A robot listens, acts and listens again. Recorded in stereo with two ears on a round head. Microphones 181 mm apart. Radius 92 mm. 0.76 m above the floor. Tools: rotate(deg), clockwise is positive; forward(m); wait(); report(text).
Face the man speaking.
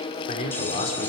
rotate(-30)
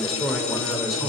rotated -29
report("Found it: a man speaking, straight ahead.")